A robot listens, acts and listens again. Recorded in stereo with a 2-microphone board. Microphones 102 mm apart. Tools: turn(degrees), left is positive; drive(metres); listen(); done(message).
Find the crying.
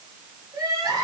turn(degrees=-35)
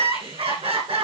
turn(degrees=-115)
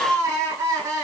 turn(degrees=-40)
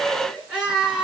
turn(degrees=-10)
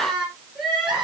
done("Facing the crying, over 4 m away.")